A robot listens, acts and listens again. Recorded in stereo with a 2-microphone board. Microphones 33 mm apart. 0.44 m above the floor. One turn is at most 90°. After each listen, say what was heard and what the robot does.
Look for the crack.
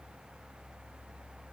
Keep listening.
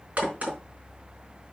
The crack: about 50° right or 130° right. Turn 50° right.
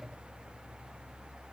Keep listening.
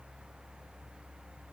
I heard a crack, but can't make it out now. It was about straight ahead or 80° right.